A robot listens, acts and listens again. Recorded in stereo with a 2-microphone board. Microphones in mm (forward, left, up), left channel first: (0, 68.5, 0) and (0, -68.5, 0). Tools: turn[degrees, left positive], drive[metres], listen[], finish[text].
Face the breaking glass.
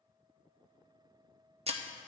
Thought: The breaking glass: about 50° right or 130° right.
Action: turn[-50]
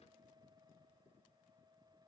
Action: listen[]
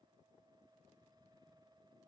Action: finish[I heard breaking glass, but can't make it out now. It was about straight ahead or 80° right.]